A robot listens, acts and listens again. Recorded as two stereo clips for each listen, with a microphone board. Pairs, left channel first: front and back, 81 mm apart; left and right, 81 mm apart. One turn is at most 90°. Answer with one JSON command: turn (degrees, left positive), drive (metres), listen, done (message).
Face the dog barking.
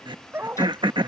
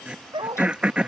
{"turn": -90}
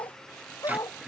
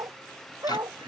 {"turn": -45}
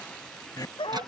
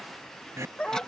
{"turn": 10}
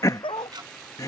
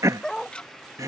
{"done": "Found it: a dog barking, straight ahead."}